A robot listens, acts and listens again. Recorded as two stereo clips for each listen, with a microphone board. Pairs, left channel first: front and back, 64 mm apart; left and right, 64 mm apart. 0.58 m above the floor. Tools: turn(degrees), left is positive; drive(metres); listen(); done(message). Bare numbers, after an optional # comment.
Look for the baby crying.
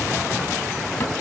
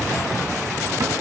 listen()
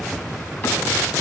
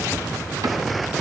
listen()
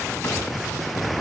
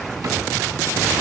done("I can't make out a baby crying to turn to.")